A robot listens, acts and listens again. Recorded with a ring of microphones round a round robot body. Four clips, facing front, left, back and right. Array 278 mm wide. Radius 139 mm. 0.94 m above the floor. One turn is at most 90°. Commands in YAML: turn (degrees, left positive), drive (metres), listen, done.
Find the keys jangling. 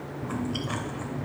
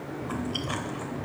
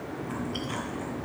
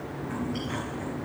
listen: true
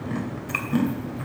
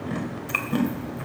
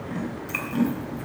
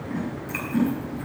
turn: 90
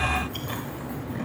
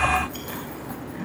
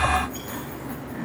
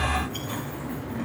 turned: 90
turn: 90
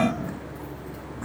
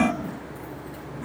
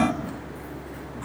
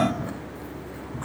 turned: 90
turn: 25
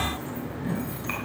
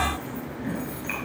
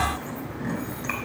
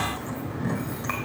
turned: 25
turn: 10
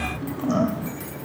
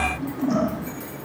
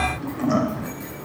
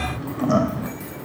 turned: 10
done: "Found it: keys jangling, straight ahead, over 4 m away."